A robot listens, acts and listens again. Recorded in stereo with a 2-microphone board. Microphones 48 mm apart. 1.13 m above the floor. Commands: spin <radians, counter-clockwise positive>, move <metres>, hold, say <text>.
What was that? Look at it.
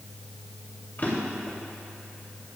spin 0.79
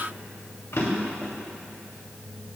spin 1.57
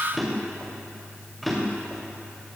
say Found it: a drawer, straight ahead, 2 to 4 m away.